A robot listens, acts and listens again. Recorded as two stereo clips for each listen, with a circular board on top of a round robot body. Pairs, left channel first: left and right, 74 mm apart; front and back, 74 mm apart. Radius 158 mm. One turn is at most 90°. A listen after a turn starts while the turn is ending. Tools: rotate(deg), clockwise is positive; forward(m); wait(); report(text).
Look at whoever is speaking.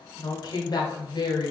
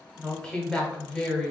rotate(-80)
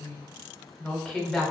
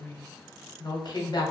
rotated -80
report("Found it: a woman speaking, straight ahead.")